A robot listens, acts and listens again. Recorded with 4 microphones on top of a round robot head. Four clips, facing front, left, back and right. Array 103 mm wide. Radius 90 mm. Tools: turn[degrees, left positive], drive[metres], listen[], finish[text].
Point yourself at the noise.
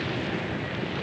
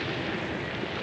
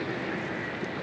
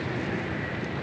Action: listen[]
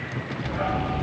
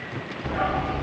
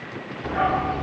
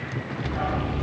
Thought: The dog barking: 170° left.
Action: turn[170]
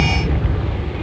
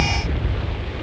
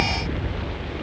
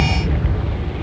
Thought: The dog barking is now 15° right.
Action: turn[-15]
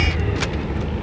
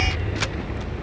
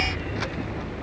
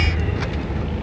Thought: The dog barking is now 10° right.
Action: turn[-10]
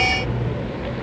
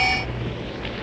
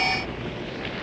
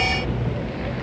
Thought: The dog barking is now 10° right.
Action: turn[-10]
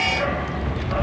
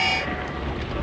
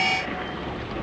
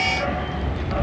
Action: finish[Facing the dog barking, 2 to 4 m away.]